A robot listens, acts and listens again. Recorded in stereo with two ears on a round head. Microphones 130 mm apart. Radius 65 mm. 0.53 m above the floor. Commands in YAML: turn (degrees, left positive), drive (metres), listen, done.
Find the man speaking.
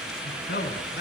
turn: 90
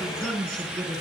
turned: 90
done: "Found it: a man speaking, straight ahead."